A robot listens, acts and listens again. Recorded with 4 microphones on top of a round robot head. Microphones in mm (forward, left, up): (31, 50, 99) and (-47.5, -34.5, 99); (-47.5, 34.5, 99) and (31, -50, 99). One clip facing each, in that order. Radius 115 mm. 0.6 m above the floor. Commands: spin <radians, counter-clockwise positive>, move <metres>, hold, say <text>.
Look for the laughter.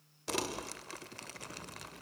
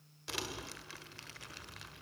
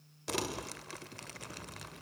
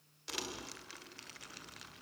hold
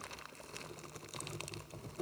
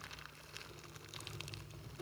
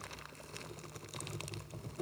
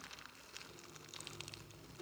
hold
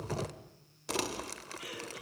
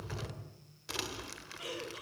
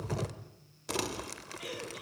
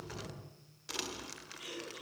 spin 2.88
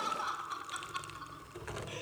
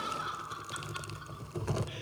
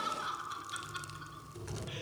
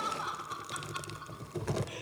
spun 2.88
say Found it: laughter, straight ahead, over 4 m away.